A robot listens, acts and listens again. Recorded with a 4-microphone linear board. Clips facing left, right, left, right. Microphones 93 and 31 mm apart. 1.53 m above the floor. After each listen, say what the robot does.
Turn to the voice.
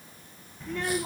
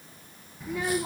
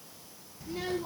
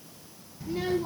Turn 30° right.
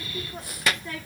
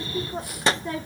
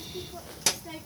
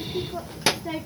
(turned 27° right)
Turn 145° right.
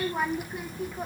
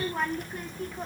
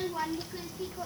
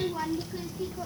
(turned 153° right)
Turn 10° left.
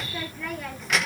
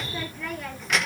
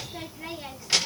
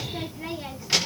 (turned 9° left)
Facing the child speaking.